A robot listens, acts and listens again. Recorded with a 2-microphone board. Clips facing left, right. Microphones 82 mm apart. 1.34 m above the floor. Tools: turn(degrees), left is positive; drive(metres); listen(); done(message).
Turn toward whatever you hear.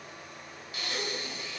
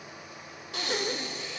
turn(degrees=-90)
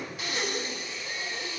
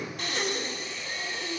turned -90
done("Found it: breathing, straight ahead, 1 to 2 m away.")